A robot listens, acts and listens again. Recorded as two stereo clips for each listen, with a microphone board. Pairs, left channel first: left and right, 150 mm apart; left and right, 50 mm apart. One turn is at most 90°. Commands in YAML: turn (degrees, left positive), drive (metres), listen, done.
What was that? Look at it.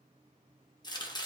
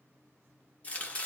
turn: 30
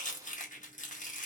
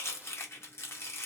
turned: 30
turn: 90
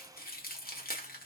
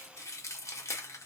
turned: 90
turn: 80
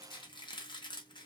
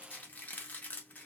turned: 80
turn: 30
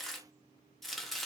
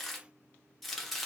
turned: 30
done: "Facing the chopping, under 1 m away."